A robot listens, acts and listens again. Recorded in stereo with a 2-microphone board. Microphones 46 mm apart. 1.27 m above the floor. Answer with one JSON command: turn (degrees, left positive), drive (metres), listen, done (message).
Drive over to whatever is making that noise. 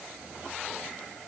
{"listen": true}
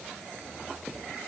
{"listen": true}
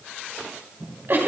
{"turn": -60}
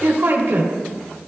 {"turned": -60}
{"turn": -60}
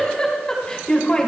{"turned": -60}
{"turn": 20}
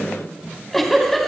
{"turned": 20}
{"drive": 1.0}
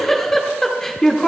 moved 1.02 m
{"turn": 15}
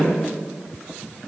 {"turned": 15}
{"drive": 1.0}
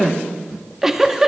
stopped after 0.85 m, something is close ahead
{"turn": -10}
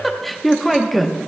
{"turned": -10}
{"done": "I am next to the giggle."}